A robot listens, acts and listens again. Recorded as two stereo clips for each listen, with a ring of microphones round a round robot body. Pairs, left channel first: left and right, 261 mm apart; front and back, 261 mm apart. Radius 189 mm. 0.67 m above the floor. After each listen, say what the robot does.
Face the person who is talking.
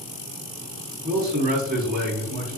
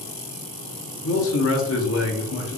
Turn 35° right.
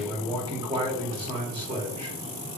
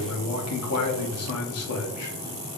Turn 15° right.
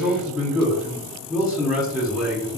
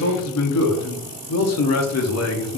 Facing the man speaking.